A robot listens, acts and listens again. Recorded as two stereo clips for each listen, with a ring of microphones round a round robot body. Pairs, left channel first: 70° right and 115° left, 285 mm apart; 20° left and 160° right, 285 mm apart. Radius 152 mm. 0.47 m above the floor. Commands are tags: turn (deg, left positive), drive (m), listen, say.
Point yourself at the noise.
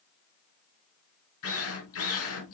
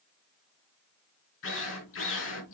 <turn deg="-25"/>
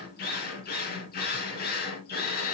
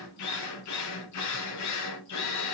<turn deg="-10"/>
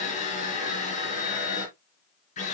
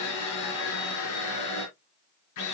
<say>Found it: a drill, straight ahead.</say>